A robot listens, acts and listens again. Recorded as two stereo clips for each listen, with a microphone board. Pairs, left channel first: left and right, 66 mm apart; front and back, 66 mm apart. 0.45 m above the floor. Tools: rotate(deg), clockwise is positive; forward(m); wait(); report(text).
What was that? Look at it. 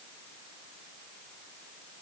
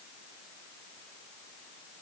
wait()
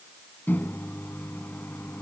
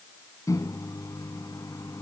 rotate(-30)
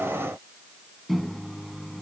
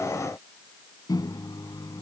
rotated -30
report("Found it: a microwave, straight ahead.")